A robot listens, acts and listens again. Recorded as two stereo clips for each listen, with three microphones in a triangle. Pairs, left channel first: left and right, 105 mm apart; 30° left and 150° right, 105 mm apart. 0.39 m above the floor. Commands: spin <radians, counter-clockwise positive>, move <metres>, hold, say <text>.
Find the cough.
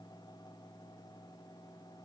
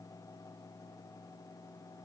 hold
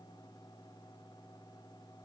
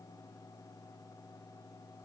hold
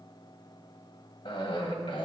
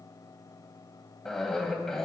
spin 2.01
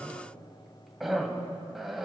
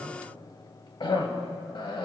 say Facing the cough, 1 to 2 m away.